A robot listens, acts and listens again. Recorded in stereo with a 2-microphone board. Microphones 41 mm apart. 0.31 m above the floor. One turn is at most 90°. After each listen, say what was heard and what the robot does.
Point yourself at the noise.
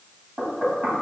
The knocking: about 55° right or 125° right. Turn 55° right.
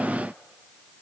Keep listening.
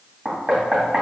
So it is at 50° right. Turn 50° right.
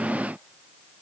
Keep listening.
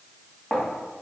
The knocking is now 10° left. Turn 10° left.
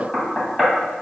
Facing the knocking, 2 to 4 m away.